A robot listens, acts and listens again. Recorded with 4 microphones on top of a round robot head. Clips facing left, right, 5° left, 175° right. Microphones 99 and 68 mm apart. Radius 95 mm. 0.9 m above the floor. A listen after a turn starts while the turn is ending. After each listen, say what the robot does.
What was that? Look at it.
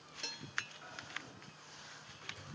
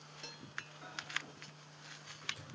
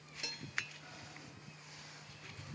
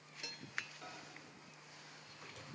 Turn 175° right.
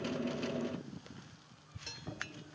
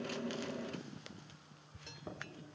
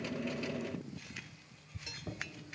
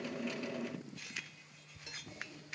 Turn 30° right.
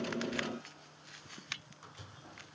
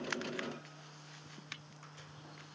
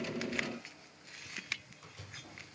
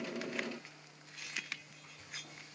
Turn 15° left.
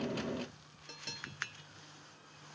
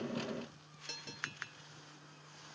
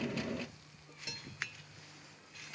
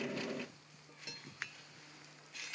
Keep listening.
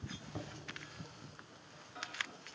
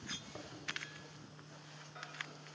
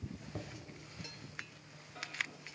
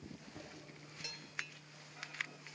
Found it: a microwave, straight ahead.